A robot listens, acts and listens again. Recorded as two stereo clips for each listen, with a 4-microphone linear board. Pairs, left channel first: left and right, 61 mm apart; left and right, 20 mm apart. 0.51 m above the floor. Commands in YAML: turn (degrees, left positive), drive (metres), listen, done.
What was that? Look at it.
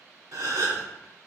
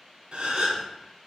turn: -60
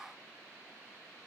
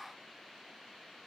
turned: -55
listen: true
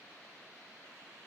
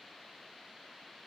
done: "I heard a gasp, but can't make it out now. It was about 5° right or 65° right."